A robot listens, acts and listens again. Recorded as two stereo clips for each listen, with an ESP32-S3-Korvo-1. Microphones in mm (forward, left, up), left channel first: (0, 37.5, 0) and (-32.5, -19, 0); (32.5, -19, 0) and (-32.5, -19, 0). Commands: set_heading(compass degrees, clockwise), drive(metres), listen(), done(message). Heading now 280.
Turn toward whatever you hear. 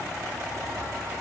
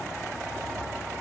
listen()
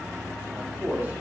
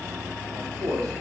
set_heading(100)
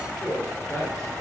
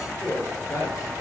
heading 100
set_heading(75)
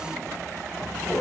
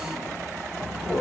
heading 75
set_heading(60)
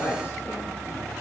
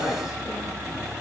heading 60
done("Found it: a man speaking, straight ahead, over 4 m away.")